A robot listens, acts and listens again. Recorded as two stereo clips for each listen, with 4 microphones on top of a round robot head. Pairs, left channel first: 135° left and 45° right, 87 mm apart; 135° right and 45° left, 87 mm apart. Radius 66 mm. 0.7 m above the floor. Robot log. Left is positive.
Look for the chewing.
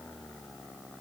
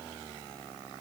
cmd idle
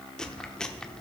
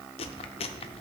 note: The chewing: 140° right.
cmd yaw -140
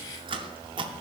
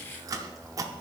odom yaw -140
note: The chewing is now 10° right.
cmd yaw -10
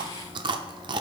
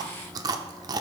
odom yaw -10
end: Facing the chewing, under 1 m away.